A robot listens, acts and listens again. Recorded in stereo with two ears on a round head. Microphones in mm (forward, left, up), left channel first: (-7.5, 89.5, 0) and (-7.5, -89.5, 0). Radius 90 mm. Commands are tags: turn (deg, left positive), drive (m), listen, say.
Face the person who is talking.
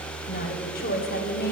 <turn deg="45"/>
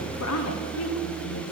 <turn deg="85"/>
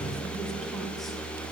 <listen/>
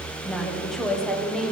<say>Found it: a woman speaking, straight ahead, 1 to 2 m away.</say>